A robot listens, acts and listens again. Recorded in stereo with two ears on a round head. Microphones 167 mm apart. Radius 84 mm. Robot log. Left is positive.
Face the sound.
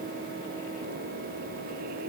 cmd idle
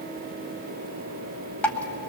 cmd yaw +30
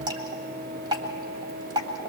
note: So it is at 25° right.
cmd yaw -25
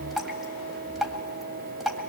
end: Facing the dripping.